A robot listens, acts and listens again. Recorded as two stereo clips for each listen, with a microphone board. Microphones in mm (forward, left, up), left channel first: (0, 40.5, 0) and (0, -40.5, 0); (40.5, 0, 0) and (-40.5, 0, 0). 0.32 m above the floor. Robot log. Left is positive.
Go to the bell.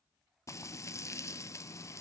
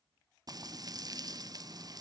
cmd idle
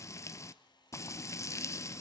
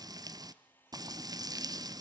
cmd idle
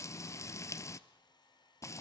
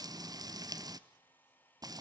end: I can't make out a bell to turn to.